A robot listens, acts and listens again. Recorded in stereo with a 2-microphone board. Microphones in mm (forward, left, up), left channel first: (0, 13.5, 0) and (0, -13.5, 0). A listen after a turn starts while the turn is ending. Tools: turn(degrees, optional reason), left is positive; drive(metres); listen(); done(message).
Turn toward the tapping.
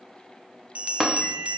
turn(degrees=-30)
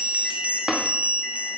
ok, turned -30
turn(degrees=-150, reason="So it is at 150° right.")
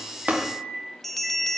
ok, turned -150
listen()
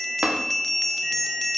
turn(degrees=-50, reason="The tapping is now 50° right.")
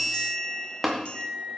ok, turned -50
done("Found it: tapping, straight ahead, 1 to 2 m away.")